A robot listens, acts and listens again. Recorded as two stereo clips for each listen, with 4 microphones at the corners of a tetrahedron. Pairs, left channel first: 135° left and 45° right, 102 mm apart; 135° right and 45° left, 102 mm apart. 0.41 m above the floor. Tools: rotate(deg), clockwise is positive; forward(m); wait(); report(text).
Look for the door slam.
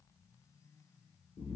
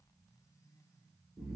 wait()
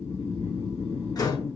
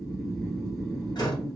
rotate(-180)
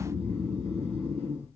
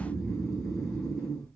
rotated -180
report("Facing where the door slam came from. I can't hear it now.")